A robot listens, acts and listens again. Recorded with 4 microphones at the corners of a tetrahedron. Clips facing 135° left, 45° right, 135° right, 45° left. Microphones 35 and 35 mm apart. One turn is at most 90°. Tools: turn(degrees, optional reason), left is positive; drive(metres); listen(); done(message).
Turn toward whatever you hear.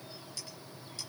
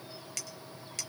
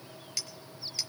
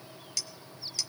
turn(degrees=-65, reason="The clink: 65° right.")
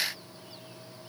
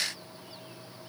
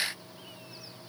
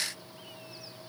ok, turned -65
listen()
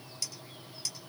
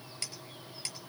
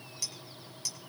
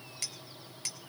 done("Found it: a clink, straight ahead.")